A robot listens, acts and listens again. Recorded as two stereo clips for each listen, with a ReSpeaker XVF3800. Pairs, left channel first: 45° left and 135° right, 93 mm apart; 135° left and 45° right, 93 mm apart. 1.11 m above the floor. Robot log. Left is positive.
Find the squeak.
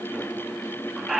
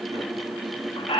note: The squeak: 135° left.
cmd yaw +135
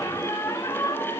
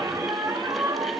end: Facing the squeak, under 1 m away.